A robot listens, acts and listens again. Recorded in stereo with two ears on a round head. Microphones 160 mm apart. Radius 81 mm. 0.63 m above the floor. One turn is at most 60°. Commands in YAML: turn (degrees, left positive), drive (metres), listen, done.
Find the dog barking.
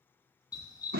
turn: 20
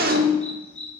done: "Facing the dog barking, 2 to 4 m away."